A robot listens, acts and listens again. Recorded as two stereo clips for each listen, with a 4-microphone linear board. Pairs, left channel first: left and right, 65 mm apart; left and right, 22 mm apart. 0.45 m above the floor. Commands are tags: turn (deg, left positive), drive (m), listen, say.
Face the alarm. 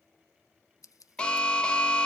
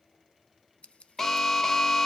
<turn deg="15"/>
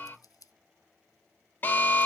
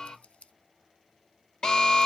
<turn deg="150"/>
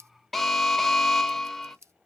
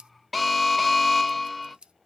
<say>Found it: an alarm, straight ahead, under 1 m away.</say>